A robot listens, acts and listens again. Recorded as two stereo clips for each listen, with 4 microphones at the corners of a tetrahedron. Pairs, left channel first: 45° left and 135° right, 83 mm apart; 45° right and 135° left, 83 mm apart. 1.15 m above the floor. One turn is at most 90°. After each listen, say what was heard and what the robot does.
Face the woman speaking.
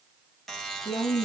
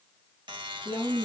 The woman speaking: 80° left. Turn 80° left.
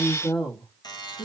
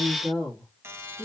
The woman speaking is now 25° left. Turn 25° left.
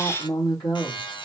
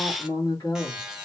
Found it: a woman speaking, straight ahead.